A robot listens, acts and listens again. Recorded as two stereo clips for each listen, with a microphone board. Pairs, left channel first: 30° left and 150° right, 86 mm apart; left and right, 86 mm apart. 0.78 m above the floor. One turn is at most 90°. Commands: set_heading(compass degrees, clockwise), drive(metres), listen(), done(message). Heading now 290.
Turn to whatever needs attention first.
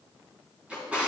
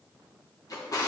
listen()
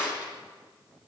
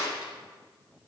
listen()
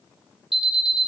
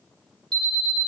set_heading(355)
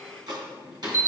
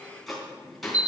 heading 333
set_heading(353)
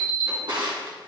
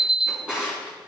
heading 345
set_heading(355)
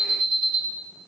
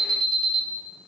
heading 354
done("Found it: an alarm, straight ahead, 1 to 2 m away.")